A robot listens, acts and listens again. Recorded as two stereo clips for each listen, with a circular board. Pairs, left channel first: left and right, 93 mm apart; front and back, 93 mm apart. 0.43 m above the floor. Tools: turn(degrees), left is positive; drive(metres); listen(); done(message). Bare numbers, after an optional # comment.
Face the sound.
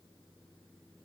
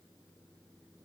listen()
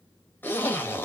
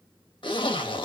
# The zipper: 25° left.
turn(25)
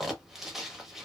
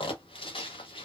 done("Found it: a zipper, straight ahead.")